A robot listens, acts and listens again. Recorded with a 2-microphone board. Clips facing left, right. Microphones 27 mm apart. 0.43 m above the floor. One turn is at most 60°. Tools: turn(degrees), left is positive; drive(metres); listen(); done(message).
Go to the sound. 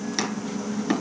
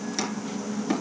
turn(degrees=30)
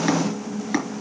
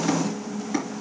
turn(degrees=60)
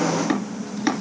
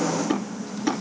turn(degrees=60)
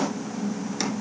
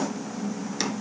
listen()
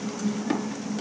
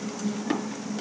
drive(metres=1.0)
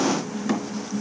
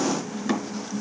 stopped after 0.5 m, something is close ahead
done("Something is in my way. I am facing the chopping but have not reached it.")